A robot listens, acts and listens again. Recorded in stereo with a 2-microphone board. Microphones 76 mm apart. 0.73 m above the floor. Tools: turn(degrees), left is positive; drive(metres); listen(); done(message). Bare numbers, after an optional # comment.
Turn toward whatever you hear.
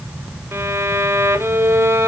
# The violin: about 35° right or 145° right.
turn(-35)
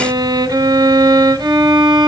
# So it is at 105° right.
turn(-105)
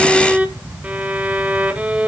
# The violin is now 20° right.
turn(-20)
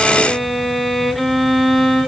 done("Facing the violin, 1 to 2 m away.")